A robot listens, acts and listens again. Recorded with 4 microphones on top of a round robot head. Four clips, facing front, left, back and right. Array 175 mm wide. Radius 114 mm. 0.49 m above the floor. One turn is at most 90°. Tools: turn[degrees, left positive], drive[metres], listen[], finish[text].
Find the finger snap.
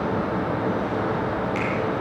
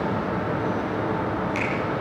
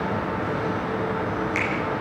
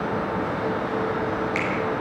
Thought: The finger snap: 145° left.
Action: turn[90]
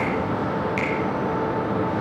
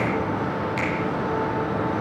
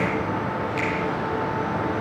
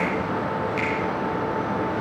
Thought: The finger snap is now 45° left.
Action: turn[45]
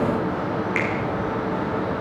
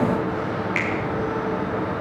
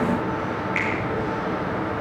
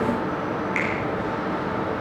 Thought: The finger snap is now 15° left.
Action: turn[15]
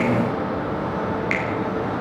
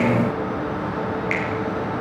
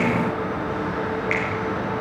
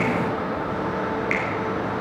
Action: listen[]
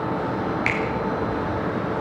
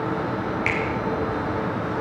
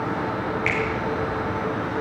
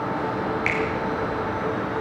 Action: finish[Found it: a finger snap, straight ahead, over 4 m away.]